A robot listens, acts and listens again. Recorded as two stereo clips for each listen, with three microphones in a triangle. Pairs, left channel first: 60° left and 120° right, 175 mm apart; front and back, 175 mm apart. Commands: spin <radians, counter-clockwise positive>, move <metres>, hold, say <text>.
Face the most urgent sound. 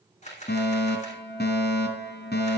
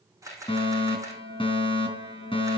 spin 1.05
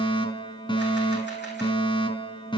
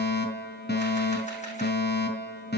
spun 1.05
say Found it: a fire alarm, straight ahead, over 4 m away.